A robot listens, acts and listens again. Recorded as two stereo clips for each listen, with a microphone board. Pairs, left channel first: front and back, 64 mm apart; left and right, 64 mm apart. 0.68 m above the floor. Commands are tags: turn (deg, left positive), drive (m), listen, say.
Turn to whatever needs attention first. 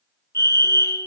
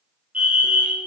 <turn deg="-25"/>
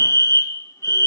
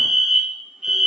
<turn deg="-10"/>
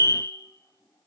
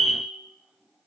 <say>Found it: a fire alarm, straight ahead.</say>